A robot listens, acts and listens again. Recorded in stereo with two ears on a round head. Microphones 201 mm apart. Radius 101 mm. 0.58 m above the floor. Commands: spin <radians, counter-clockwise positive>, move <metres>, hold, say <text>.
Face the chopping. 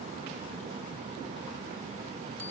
hold
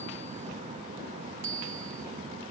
hold
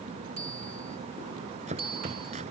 spin -0.52
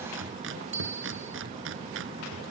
spin -2.09
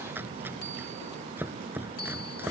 spin -0.17
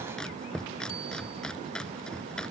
say Found it: chopping, straight ahead.